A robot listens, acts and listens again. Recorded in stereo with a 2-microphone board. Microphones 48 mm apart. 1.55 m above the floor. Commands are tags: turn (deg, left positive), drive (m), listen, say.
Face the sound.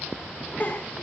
<turn deg="35"/>
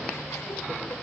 <listen/>
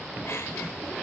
<listen/>
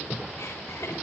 <say>I heard a giggle, but can't make it out now. It was about straight ahead or 110° left.</say>